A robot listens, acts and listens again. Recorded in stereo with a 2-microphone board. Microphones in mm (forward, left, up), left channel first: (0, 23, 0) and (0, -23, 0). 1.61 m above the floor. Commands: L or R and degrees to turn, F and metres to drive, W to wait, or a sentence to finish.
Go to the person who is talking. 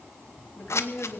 L25
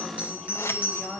F1.0
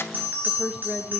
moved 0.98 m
F1.0
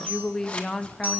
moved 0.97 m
L10
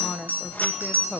F1.0
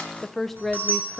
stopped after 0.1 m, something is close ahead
Arrived at the woman speaking, straight ahead.